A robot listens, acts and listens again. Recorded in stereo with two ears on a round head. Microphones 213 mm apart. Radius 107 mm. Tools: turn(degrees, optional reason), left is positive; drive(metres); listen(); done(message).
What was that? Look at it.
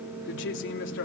turn(degrees=55, reason="The woman speaking: about 55° left or 125° left.")
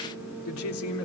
turn(degrees=65, reason="So it is at 65° left.")
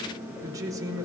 turn(degrees=-15, reason="The woman speaking is now 15° right.")
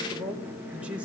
done("Found it: a woman speaking, straight ahead, over 4 m away.")